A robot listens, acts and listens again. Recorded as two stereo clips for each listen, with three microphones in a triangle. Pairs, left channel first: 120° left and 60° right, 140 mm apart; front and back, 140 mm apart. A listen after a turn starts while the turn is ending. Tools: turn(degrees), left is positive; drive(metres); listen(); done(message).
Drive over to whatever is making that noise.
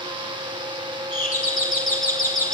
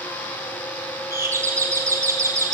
turn(degrees=110)
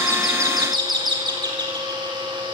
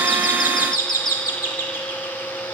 drive(metres=1.0)
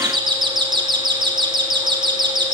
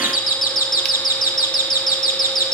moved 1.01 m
drive(metres=1.0)
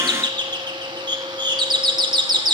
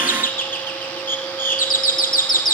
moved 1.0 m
drive(metres=1.0)
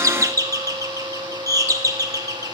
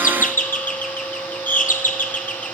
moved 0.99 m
drive(metres=1.0)
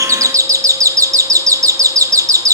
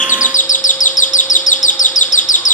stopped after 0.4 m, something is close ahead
done("I am next to the doorbell.")